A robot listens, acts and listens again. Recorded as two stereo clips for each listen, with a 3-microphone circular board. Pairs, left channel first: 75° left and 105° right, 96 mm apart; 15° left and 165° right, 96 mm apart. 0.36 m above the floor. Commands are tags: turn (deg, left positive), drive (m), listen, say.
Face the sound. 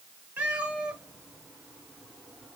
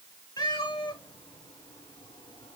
<turn deg="-25"/>
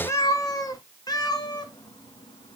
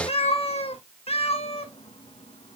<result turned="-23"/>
<turn deg="30"/>
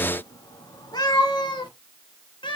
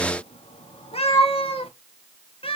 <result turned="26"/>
<turn deg="35"/>
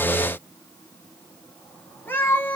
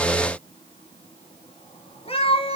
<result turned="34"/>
<say>Facing the cat meowing, 1 to 2 m away.</say>